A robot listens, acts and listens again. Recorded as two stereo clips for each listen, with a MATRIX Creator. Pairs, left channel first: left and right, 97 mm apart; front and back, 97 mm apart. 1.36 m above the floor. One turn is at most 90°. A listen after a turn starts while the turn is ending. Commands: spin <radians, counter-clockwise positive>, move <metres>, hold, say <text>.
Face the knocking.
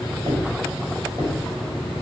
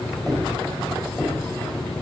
spin -1.57
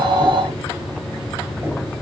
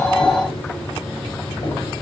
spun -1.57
hold
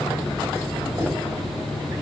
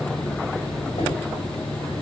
spin -0.35
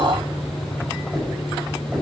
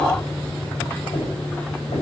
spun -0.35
say Found it: knocking, straight ahead.